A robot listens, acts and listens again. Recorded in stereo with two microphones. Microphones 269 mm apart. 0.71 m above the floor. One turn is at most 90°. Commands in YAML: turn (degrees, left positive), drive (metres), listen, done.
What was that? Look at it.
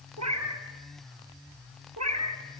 turn: -90
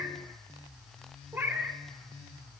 turn: -10
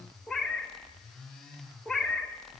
done: "Found it: a cat meowing, straight ahead, under 1 m away."